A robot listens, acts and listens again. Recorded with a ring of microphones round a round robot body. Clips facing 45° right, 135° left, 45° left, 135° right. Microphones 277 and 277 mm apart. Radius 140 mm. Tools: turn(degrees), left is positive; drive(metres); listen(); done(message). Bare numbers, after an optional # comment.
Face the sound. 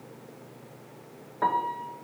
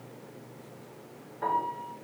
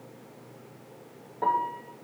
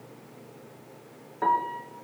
# The piano: 70° right.
turn(-70)
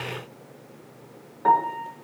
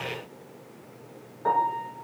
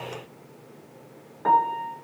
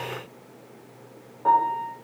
done("Found it: a piano, straight ahead.")